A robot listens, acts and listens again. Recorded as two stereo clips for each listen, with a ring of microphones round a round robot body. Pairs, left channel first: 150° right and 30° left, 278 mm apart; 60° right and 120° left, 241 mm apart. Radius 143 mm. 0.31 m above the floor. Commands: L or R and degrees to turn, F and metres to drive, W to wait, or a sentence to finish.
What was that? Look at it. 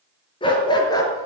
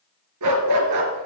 L135
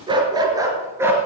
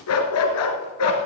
R50
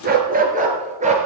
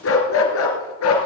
R35
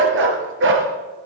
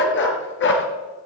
R20
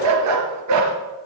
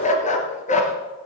Found it: a dog barking, straight ahead.